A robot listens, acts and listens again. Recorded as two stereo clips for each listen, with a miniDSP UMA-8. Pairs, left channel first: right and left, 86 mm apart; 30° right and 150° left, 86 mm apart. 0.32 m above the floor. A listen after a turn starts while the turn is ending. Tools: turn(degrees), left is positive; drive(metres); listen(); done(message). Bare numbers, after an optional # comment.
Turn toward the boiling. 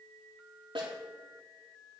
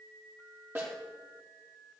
listen()
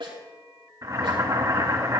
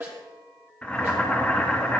# The boiling: 45° left.
turn(45)
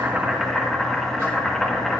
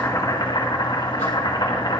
done("Facing the boiling, 2 to 4 m away.")